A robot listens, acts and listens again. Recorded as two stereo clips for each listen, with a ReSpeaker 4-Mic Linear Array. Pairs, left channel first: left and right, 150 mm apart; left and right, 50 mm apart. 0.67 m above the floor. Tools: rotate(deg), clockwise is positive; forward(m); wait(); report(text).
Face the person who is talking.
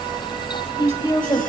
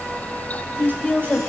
rotate(-30)
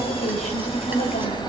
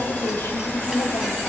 rotate(-120)
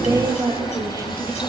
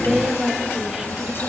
rotate(25)
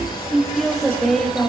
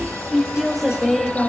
report("Facing the woman speaking.")